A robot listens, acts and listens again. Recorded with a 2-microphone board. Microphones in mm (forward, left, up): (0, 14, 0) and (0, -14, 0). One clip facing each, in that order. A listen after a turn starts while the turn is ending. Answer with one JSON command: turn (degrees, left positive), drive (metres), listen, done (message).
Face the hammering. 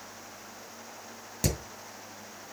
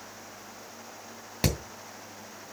{"turn": -45}
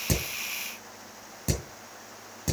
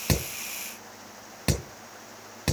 {"turn": -85}
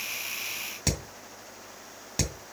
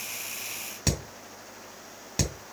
{"done": "Facing the hammering."}